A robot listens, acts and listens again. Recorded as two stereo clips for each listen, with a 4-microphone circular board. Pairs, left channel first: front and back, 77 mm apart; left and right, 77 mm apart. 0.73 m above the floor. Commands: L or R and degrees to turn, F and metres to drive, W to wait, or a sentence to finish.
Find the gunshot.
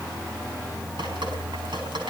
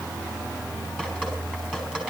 W
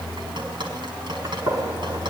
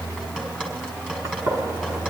R140
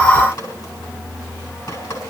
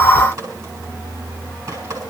Facing where the gunshot came from. I can't hear it now.